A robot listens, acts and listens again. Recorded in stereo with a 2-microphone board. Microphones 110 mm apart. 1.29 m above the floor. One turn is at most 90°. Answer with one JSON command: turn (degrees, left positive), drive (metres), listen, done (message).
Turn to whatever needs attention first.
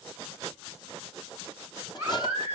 {"turn": -20}
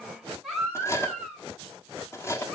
{"done": "Found it: a baby crying, straight ahead, over 4 m away."}